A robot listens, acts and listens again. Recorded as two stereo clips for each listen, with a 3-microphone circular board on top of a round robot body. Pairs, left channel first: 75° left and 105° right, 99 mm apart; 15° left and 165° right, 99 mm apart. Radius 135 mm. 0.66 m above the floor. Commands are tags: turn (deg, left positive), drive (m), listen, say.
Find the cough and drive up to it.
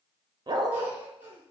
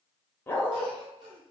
<turn deg="-175"/>
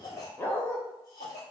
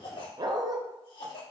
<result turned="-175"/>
<turn deg="30"/>
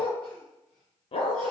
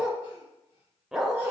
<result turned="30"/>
<listen/>
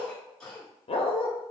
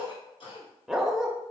<drive m="1.0"/>
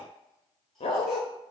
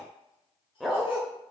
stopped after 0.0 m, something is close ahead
<listen/>
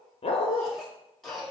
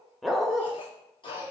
<turn deg="-10"/>
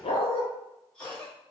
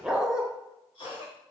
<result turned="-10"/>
<say>Blocked. The cough is further on, straight ahead.</say>